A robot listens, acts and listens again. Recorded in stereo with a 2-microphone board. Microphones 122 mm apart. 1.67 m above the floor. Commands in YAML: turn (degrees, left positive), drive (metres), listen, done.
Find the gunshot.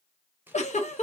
listen: true
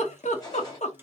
turn: 35
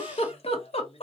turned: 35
listen: true
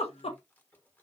done: "I heard a gunshot, but can't make it out now. It was about straight ahead or 110° left."